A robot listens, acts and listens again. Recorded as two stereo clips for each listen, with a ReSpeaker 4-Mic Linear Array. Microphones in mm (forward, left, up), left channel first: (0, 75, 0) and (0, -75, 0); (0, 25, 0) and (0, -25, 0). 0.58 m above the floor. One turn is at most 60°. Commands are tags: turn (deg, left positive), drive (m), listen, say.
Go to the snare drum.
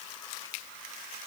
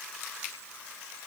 <listen/>
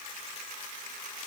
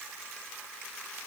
<listen/>
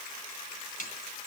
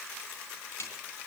<turn deg="60"/>
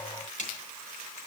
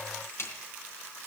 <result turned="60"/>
<turn deg="55"/>
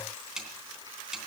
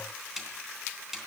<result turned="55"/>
<drive m="1.0"/>
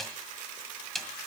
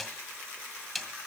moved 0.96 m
<drive m="1.0"/>
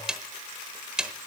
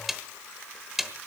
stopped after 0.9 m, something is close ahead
<say>I am next to the snare drum.</say>